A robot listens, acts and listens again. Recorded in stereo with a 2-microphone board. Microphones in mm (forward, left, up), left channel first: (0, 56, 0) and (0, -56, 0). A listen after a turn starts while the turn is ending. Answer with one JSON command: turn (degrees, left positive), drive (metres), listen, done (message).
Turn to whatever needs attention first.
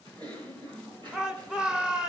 {"turn": -30}
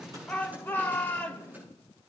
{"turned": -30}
{"turn": 20}
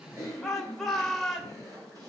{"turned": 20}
{"done": "Found it: a shout, straight ahead."}